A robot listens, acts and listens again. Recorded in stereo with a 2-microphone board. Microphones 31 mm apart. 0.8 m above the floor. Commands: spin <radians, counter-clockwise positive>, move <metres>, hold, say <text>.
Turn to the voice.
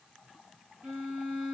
hold
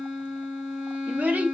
spin -1.22
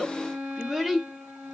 say Facing the child speaking.